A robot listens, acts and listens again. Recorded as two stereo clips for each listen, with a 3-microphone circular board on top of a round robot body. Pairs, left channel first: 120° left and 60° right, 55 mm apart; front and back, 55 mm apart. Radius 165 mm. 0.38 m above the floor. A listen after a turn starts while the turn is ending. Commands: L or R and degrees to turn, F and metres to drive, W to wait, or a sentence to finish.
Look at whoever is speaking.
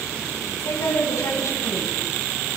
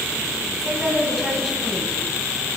L95
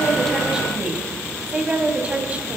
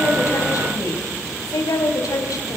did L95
L10
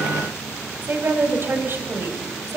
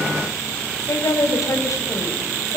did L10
R15
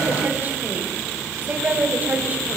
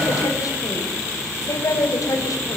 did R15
Found it: a woman speaking, straight ahead, 2 to 4 m away.